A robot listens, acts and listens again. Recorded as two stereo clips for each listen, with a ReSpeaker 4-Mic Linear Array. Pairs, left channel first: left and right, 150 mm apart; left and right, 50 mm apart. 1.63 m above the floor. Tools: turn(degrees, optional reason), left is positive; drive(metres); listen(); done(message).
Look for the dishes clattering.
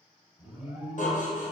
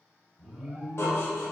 turn(degrees=55, reason="The dishes clattering: about 55° left or 125° left.")
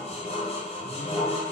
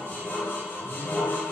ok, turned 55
turn(degrees=50, reason="So it is at 50° left.")
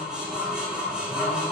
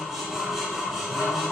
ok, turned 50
done("Found it: dishes clattering, straight ahead.")